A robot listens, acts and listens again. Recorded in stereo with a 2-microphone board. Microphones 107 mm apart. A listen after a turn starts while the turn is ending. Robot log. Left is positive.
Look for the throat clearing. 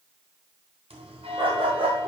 cmd idle
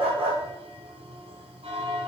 cmd idle
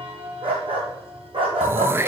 note: The throat clearing: about 20° right or 160° right.
cmd yaw -20
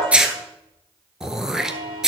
end: Facing the throat clearing, under 1 m away.